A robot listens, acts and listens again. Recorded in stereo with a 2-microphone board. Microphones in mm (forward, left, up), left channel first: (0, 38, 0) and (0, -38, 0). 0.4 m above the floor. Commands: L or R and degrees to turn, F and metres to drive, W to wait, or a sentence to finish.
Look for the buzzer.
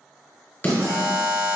R45
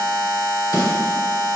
Found it: a buzzer, straight ahead, 1 to 2 m away.